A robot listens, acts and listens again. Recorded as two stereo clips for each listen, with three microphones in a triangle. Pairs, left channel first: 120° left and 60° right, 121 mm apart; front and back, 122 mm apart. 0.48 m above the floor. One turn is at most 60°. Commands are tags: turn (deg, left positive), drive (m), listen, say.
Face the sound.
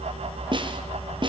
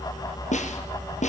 <turn deg="-10"/>
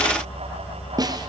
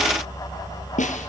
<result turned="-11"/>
<say>Found it: a snare drum, straight ahead.</say>